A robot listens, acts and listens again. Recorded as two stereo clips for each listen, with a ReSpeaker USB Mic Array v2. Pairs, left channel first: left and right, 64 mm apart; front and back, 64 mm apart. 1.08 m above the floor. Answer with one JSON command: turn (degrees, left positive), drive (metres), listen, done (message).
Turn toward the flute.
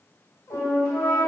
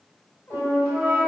{"turn": 115}
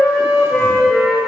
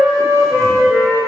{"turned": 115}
{"done": "Facing the flute, 1 to 2 m away."}